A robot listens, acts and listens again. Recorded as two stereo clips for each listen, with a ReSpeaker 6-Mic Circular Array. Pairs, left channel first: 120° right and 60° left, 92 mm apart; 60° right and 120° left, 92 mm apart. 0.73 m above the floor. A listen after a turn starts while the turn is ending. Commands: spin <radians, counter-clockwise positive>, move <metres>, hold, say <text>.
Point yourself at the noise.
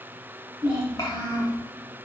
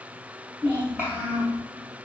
spin -2.97
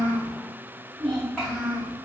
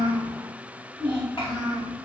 spin -0.52
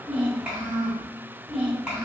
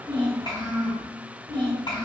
spin -0.35
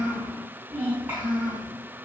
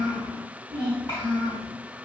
say Facing the child speaking, 2 to 4 m away.